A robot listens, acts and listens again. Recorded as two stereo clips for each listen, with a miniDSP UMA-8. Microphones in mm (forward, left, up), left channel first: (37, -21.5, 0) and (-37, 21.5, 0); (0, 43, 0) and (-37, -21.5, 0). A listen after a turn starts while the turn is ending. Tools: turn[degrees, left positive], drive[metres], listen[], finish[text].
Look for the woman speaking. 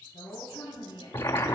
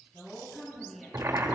Thought: The woman speaking: 25° right.
Action: turn[-25]
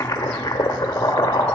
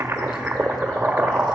Action: listen[]
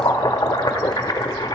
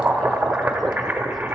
Action: listen[]
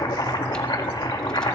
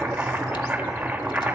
Action: finish[I heard a woman speaking from this way, but can't make it out now.]